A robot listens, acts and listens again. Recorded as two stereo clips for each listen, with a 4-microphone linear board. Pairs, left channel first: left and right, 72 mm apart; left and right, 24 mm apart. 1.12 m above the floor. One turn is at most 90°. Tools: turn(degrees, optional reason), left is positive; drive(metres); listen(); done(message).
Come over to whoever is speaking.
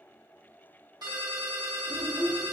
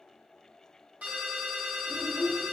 turn(degrees=-55, reason="The child speaking: about 55° right or 125° right.")
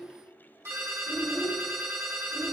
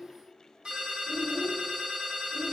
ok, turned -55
drive(metres=1.0)
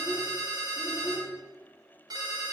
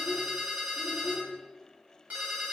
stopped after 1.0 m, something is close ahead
done("Arrived at the child speaking, straight ahead.")